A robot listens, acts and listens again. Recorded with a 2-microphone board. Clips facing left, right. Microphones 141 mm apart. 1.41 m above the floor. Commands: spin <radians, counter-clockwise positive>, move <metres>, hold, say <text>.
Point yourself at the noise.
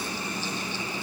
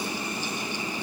hold
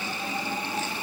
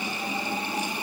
hold
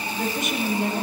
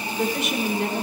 spin -1.57
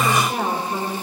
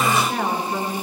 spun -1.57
spin 0.26
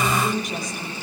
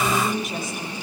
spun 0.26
say Facing the woman speaking.